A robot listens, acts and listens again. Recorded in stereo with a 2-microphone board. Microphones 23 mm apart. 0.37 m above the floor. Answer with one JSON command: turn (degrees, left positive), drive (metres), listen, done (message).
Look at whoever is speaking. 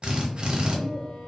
{"turn": 35}
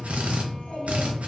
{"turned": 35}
{"turn": 105}
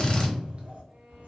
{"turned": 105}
{"turn": -70}
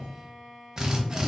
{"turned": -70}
{"listen": true}
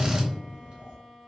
{"turn": -45}
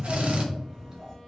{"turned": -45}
{"turn": -10}
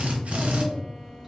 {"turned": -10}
{"done": "Facing the child speaking, 1 to 2 m away."}